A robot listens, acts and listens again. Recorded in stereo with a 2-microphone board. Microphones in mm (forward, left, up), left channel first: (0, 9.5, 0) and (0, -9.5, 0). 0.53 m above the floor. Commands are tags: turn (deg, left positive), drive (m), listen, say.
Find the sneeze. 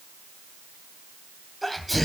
<turn deg="30"/>
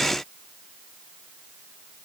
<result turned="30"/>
<listen/>
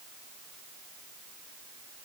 <say>I heard a sneeze, but can't make it out now. It was about 25° right or 145° left.</say>